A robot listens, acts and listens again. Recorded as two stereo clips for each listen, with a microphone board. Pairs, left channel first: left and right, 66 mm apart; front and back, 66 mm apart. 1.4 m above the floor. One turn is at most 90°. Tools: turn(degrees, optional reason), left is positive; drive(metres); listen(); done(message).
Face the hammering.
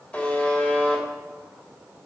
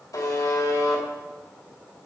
listen()
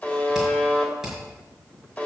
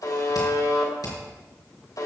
turn(degrees=-10, reason="The hammering: 10° right.")
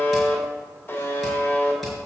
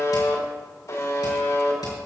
done("Found it: hammering, straight ahead, over 4 m away.")